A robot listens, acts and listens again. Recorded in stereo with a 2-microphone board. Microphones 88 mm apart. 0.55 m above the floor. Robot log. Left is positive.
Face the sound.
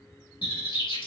note: The bird: about 70° left or 110° left.
cmd yaw +70
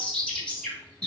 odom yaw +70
note: So it is at 15° left.
cmd yaw +15
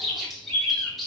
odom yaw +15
end: Facing the bird.